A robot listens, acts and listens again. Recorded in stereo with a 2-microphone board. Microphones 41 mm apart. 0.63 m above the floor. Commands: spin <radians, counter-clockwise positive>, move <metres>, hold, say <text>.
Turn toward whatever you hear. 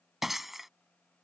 spin -0.52
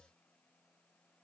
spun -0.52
hold
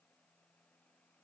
say I heard breaking glass, but can't make it out now. It was about 25° left or 145° right.